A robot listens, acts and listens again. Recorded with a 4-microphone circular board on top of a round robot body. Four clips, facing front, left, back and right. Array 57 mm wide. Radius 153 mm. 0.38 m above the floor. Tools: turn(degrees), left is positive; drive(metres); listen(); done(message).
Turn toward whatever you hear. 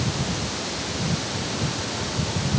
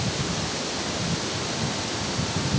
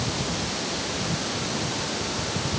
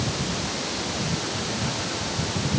listen()
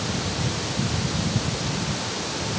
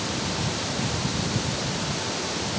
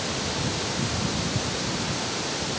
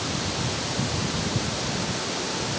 listen()
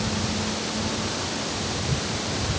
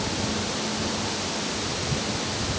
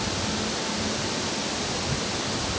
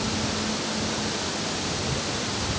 done("I can't make out anything.")